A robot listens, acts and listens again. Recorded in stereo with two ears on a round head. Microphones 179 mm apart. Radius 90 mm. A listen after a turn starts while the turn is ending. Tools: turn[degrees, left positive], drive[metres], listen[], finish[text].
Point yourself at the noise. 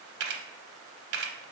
Thought: The camera shutter: about 60° right or 120° right.
Action: turn[-60]
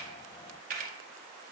Thought: So it is at 50° right.
Action: turn[-50]
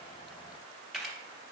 Action: finish[Found it: a camera shutter, straight ahead, under 1 m away.]